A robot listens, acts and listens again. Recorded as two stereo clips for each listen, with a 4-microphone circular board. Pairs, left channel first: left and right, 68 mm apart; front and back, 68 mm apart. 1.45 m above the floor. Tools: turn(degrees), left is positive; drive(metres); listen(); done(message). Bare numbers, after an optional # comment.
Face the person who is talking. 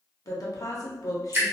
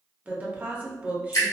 # The woman speaking: 115° left.
turn(115)
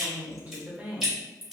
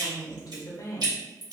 # The woman speaking is now 25° right.
turn(-25)
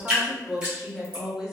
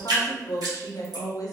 # The woman speaking is now 10° right.
turn(-10)
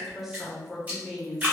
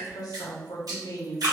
done("Found it: a woman speaking, straight ahead.")